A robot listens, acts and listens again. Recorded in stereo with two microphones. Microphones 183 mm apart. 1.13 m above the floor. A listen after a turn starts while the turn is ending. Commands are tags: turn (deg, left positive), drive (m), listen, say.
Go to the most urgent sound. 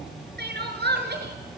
<turn deg="-65"/>
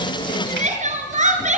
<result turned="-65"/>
<turn deg="-45"/>
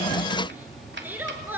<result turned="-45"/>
<turn deg="-10"/>
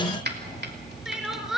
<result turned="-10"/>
<drive m="1.0"/>
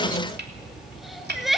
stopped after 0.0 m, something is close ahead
<say>Blocked. The crying is further on, straight ahead.</say>